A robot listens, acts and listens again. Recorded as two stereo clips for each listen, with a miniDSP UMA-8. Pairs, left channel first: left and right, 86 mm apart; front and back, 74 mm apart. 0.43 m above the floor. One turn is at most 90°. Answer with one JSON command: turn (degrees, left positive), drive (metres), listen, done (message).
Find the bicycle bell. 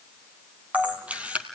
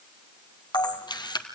{"listen": true}
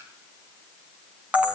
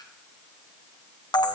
{"listen": true}
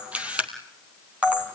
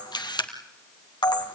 {"done": "I can't make out a bicycle bell, only a camera shutter."}